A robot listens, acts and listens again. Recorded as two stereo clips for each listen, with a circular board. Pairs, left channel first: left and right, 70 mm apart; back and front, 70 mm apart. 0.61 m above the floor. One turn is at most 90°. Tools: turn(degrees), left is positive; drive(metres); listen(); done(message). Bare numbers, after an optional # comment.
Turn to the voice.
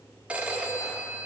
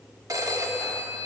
listen()
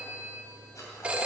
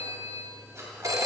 listen()
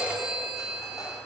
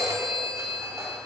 done("I can't make out anyone speaking to turn to.")